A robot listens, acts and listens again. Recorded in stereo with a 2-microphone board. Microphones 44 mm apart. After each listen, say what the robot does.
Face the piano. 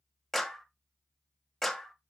Keep listening.
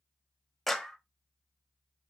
Keep listening.
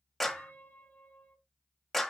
Turn 45° left.
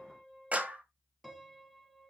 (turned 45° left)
Found it: a piano, straight ahead.